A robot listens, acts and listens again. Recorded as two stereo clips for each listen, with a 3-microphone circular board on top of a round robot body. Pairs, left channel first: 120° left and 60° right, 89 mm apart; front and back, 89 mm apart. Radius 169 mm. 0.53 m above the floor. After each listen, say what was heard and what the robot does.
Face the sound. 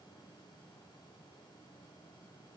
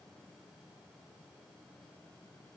Keep listening.
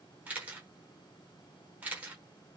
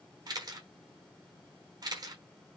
The camera shutter: 135° right. Turn 135° right.
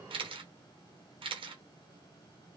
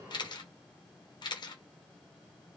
The camera shutter is now 40° right. Turn 40° right.
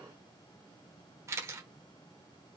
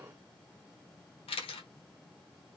Found it: a camera shutter, straight ahead.